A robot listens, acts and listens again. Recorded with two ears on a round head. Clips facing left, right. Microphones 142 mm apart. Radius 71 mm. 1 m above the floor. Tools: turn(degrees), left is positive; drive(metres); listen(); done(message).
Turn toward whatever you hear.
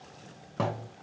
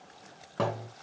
turn(degrees=30)
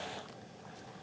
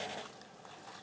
listen()
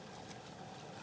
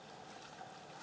done("I heard a thud, but can't make it out now. It was about 30° right or 150° left.")